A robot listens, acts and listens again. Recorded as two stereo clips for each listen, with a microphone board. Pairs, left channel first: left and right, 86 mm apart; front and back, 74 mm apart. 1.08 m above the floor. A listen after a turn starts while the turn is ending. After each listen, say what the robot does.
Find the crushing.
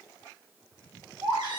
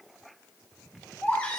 Keep listening.
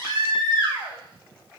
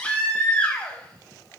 Keep listening.
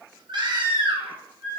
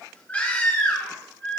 I can't make out crushing, only a baby crying.